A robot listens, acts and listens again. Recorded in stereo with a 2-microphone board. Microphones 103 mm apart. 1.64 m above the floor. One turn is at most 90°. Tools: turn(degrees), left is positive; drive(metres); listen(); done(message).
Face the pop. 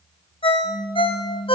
turn(degrees=20)
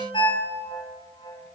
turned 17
listen()
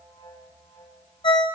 done("I heard a pop, but can't make it out now. It was about straight ahead or 145° left.")